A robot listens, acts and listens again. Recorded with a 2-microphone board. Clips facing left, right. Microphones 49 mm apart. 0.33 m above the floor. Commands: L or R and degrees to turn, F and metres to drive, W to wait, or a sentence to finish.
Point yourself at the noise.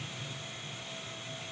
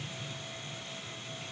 W
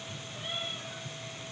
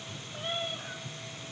R90
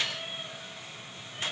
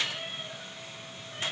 W
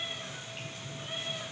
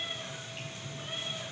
Facing the cat meowing, over 4 m away.